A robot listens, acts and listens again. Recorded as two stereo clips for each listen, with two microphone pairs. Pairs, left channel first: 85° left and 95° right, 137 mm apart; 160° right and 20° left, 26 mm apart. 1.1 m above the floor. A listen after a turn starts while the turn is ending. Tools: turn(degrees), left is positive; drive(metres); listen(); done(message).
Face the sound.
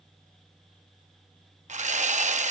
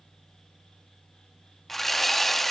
turn(degrees=-80)
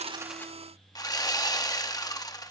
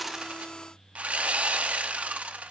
turn(degrees=25)
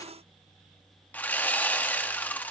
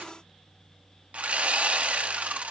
turn(degrees=10)
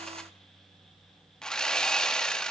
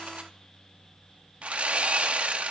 done("Found it: sawing, straight ahead.")